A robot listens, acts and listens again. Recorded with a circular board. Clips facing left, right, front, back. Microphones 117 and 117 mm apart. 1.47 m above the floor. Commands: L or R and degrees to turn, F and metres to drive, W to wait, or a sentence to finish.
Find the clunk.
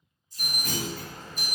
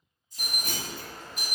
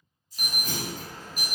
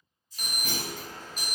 R155
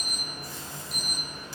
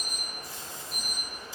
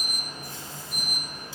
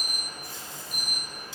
Facing where the clunk came from. I can't hear it now.